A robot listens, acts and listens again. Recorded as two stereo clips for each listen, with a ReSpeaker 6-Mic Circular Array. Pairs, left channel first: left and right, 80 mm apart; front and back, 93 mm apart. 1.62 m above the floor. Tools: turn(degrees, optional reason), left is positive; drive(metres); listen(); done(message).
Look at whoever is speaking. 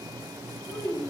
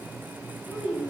turn(degrees=100, reason="The child speaking: 100° left.")
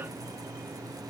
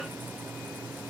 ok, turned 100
listen()
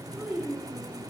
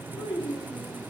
done("Found it: a child speaking, straight ahead, 2 to 4 m away.")